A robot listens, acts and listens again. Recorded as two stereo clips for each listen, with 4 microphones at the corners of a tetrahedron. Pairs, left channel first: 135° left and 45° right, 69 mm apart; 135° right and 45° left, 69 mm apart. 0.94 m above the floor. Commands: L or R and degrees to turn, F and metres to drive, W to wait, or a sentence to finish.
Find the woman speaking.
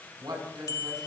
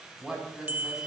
R35
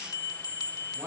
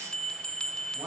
Found it: a woman speaking, straight ahead, over 4 m away.